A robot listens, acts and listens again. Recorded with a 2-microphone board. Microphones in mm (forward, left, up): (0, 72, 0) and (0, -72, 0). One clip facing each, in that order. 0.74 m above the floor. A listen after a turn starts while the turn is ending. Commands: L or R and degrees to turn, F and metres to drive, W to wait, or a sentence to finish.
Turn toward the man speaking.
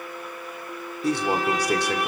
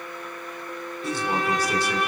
L65
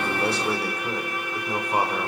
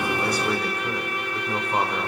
L10
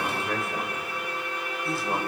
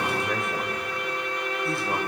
Facing the man speaking, 2 to 4 m away.